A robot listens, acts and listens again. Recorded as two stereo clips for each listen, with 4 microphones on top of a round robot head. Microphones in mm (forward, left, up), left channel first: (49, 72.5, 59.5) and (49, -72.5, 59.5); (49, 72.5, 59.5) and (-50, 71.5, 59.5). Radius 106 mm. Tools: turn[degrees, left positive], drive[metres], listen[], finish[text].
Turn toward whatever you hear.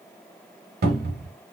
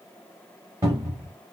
Thought: The cupboard door: 105° right.
Action: turn[-105]
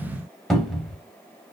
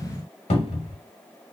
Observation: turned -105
Action: finish[Facing the cupboard door, under 1 m away.]